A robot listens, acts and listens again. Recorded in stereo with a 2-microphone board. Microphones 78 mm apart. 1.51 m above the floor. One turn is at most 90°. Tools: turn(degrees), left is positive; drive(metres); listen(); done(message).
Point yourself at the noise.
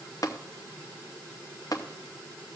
turn(degrees=50)
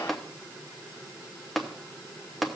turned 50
done("Found it: tapping, straight ahead.")